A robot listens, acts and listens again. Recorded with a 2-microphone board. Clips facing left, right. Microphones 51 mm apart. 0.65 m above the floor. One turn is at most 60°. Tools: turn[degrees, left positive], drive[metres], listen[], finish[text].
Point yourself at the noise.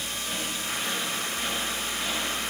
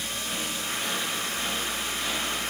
Action: listen[]
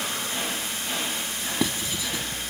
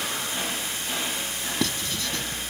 Action: turn[30]
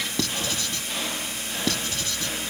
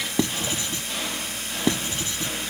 Thought: So it is at 20° right.
Action: turn[-20]
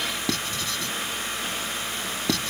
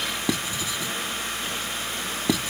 Thought: The writing is now 10° right.
Action: turn[-10]
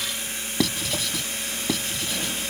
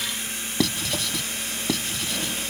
Action: finish[Found it: writing, straight ahead.]